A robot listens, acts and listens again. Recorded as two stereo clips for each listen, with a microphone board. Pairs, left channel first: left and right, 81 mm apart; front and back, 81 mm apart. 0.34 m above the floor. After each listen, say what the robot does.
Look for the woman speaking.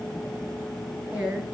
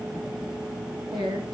Turn 165° right.
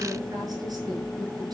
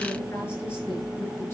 Keep listening.
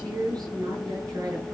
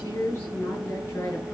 Turn 60° right.
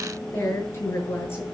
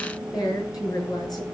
Turn 30° left.
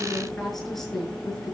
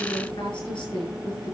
Facing the woman speaking.